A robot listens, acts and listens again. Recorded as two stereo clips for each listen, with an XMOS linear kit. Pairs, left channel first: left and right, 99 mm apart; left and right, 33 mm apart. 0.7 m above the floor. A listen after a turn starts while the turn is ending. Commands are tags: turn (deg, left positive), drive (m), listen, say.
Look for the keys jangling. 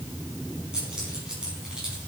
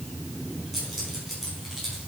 <turn deg="-30"/>
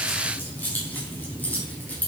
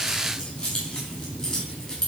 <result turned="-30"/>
<turn deg="15"/>
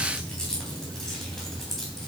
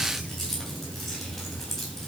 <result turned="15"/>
<say>Found it: keys jangling, straight ahead, 2 to 4 m away.</say>